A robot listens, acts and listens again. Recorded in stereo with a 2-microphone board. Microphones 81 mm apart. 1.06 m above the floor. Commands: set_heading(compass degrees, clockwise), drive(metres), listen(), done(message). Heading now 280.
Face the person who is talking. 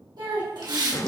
set_heading(345)
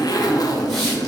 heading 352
listen()
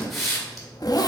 listen()
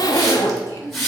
set_heading(32)
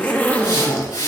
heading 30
listen()
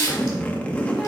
listen()
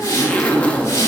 done("Facing where the child speaking came from. I can't hear it now.")